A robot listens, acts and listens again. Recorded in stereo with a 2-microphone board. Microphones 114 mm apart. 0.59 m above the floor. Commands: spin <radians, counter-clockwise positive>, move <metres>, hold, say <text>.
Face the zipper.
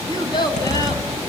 spin 1.57
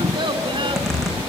say Facing the zipper, over 4 m away.